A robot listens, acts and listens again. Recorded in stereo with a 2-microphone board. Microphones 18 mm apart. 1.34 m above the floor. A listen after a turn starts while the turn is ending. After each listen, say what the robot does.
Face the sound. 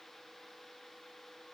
Keep listening.
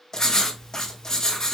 Turn 30° left.
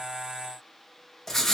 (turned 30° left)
Turn 10° left.
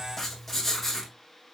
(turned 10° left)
Facing the writing.